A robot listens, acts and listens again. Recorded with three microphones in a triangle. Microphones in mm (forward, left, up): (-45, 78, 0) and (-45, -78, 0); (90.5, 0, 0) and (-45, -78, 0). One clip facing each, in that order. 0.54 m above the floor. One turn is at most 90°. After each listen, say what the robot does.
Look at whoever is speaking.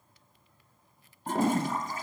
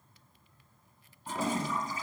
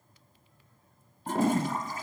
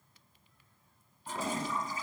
Keep listening.
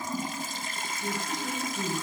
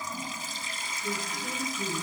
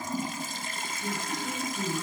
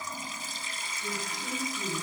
Turn 90° left.
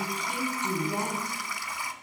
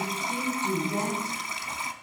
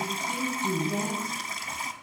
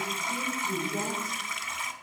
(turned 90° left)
Turn 20° left.
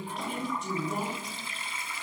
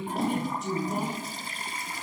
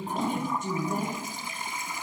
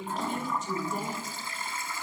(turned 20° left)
Facing the woman speaking, 2 to 4 m away.